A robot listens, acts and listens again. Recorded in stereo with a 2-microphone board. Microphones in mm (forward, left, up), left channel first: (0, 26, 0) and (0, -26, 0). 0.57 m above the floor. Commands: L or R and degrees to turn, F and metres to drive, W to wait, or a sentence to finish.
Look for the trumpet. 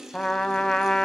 L30
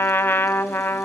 L140
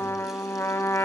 L50
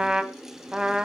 R15
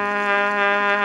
Found it: a trumpet, straight ahead.